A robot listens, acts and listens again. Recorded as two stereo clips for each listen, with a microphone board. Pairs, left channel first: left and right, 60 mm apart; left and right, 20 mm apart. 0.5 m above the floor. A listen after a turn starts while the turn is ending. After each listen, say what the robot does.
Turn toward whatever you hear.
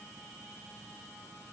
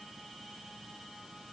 Keep listening.
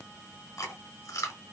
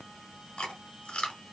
Turn 70° left.
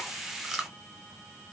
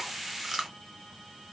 Found it: chewing, straight ahead, 1 to 2 m away.